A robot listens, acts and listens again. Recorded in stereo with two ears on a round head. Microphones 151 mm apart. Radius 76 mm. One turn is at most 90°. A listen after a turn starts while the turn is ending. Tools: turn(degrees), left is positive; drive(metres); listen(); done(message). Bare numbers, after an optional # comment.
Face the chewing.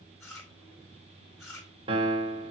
# The chewing: about 15° left or 165° left.
turn(15)
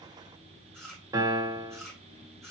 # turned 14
done("Facing the chewing, 2 to 4 m away.")